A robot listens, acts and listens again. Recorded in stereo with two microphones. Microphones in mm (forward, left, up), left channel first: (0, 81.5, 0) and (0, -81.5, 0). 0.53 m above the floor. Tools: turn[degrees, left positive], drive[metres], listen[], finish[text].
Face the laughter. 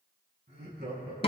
Action: turn[-90]
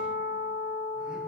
Action: listen[]
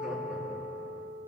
Action: listen[]
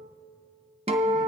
Action: finish[I heard laughter from this way, but can't make it out now.]